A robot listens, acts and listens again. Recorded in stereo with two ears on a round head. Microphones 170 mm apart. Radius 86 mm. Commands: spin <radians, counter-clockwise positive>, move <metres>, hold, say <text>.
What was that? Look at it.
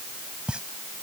spin -0.52
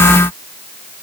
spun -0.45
hold
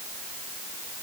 say I heard a pop, but can't make it out now. It was about 20° left or 150° right.